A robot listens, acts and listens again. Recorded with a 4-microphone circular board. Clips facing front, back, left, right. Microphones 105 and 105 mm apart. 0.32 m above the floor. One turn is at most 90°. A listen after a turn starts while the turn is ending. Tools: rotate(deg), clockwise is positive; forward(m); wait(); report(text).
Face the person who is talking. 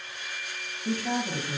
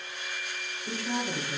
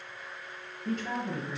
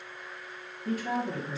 report("Found it: a woman speaking, straight ahead.")